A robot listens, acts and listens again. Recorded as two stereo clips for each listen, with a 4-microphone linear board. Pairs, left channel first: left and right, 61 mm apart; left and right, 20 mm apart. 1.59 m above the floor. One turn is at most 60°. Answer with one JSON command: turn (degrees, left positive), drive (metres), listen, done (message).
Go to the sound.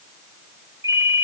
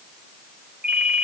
{"turn": -55}
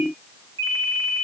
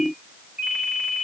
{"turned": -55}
{"turn": -60}
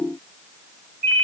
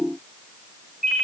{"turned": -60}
{"turn": -40}
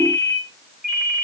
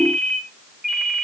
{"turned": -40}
{"turn": -15}
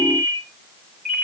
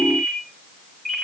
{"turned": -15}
{"drive": 1.0}
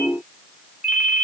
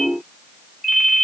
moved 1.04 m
{"turn": -10}
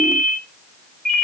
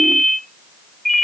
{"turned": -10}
{"drive": 1.0}
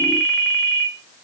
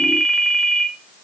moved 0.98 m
{"drive": 1.0}
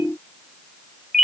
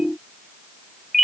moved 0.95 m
{"drive": 1.0}
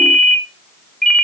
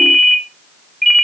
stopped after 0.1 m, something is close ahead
{"done": "I am next to the ringtone."}